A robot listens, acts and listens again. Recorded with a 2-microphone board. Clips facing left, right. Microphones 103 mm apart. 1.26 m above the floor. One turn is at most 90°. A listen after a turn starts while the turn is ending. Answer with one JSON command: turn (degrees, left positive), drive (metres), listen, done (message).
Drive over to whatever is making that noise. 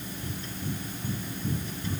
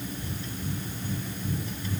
{"turn": 35}
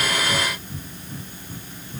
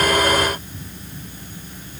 {"turn": 90}
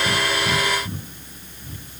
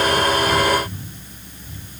{"turn": 45}
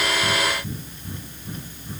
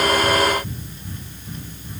{"turn": 15}
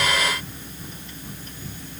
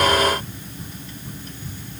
{"drive": 1.0}
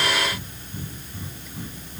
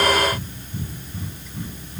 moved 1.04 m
{"drive": 1.0}
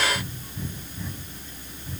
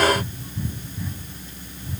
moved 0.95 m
{"drive": 1.0}
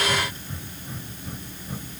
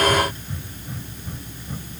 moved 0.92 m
{"drive": 1.0}
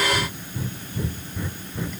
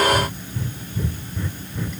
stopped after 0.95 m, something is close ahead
{"done": "I am next to the breathing."}